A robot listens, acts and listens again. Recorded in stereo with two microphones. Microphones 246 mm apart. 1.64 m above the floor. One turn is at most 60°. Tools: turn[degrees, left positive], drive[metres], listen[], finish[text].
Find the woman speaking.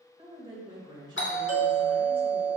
Thought: The woman speaking: about 15° right or 165° right.
Action: turn[-15]
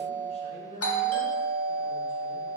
Thought: So it is at 30° left.
Action: turn[30]
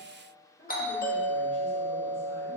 Thought: The woman speaking is now 40° left.
Action: turn[40]
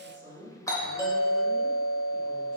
Thought: The woman speaking is now 30° left.
Action: turn[30]
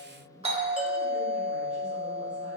Action: finish[Found it: a woman speaking, straight ahead, 1 to 2 m away.]